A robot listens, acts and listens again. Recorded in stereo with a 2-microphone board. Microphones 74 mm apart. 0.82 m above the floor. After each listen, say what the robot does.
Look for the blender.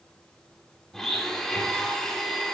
Turn 30° left.
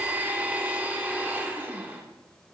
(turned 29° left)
Turn 25° right.
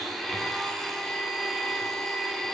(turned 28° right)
Found it: a blender, straight ahead.